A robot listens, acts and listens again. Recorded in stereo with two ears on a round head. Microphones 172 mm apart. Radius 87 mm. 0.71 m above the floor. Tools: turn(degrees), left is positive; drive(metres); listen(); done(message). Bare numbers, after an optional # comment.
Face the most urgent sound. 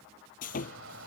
# The shout: about 70° right or 110° right.
turn(-70)
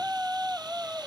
done("Found it: a shout, straight ahead.")